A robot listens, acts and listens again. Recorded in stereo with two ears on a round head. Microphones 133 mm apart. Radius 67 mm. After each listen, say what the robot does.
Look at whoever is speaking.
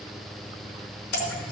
Keep listening.
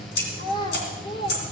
Turn 30° left.
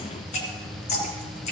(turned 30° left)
Keep listening.
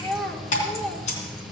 Facing the child speaking, 1 to 2 m away.